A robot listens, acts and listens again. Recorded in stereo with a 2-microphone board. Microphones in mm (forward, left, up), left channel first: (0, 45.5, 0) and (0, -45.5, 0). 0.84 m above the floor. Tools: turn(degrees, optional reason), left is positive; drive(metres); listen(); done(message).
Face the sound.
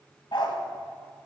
turn(degrees=65, reason="The dog barking: about 65° left or 115° left.")
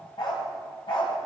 turn(degrees=70, reason="So it is at 70° left.")
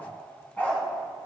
turn(degrees=20, reason="The dog barking is now 20° left.")
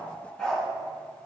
turn(degrees=10, reason="The dog barking is now 10° left.")
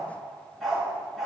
done("Found it: a dog barking, straight ahead, 2 to 4 m away.")